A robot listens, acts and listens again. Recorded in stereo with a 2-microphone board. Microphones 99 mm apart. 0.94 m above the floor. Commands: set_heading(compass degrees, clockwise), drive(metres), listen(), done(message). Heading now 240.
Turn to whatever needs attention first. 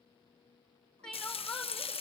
set_heading(210)
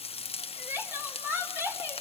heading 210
set_heading(230)
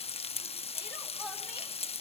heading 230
listen()
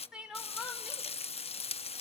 set_heading(240)
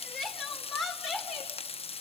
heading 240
done("Found it: crying, straight ahead, 2 to 4 m away.")